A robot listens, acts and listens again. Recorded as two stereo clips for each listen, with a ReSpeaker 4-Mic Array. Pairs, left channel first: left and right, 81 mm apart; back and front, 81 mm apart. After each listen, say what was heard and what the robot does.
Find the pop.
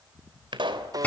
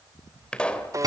The pop: 100° right. Turn 100° right.
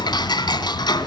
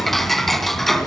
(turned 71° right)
Nothing new. It was at 30° right. Turn 30° right.
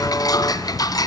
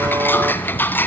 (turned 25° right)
I heard a pop from this way, but can't make it out now.